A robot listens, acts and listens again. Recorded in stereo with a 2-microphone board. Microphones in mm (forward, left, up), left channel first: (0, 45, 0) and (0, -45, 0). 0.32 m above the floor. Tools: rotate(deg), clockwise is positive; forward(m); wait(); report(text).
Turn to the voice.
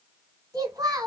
rotate(40)
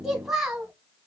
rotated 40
report("Facing the child speaking.")